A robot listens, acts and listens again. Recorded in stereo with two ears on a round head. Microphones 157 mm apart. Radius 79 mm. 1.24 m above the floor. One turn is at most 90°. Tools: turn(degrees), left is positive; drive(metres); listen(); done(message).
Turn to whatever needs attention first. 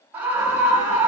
turn(degrees=-30)
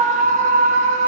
turn(degrees=-90)
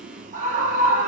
turn(degrees=-45)
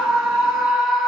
done("Facing the scream.")